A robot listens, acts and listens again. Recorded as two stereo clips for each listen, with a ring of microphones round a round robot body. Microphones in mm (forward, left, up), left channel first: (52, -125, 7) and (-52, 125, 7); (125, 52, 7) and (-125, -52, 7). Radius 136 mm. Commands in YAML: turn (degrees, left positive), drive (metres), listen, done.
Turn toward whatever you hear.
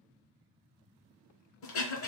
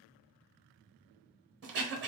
turn: -110
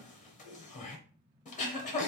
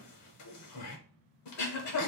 done: "Found it: throat clearing, straight ahead."